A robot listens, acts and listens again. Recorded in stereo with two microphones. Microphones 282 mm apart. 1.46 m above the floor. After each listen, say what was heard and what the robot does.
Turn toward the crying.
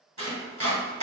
Keep listening.
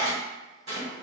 Keep listening.
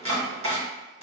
I can't make out crying, only chopping.